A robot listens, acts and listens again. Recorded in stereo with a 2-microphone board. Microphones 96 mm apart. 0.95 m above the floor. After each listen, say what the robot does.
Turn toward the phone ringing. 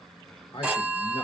Turn 15° right.
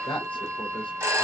Turn 145° right.
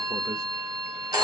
Turn 40° right.
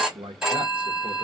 Found it: a phone ringing, straight ahead, under 1 m away.